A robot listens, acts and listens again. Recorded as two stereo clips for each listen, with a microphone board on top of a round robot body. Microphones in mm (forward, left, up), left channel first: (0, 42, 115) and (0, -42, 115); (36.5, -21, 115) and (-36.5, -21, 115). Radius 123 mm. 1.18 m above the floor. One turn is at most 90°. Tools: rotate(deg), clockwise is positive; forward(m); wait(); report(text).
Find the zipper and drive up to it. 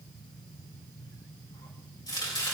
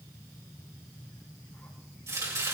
wait()
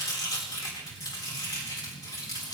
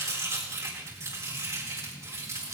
wait()
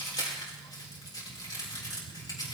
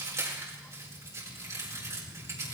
report("I can't make out a zipper to turn to.")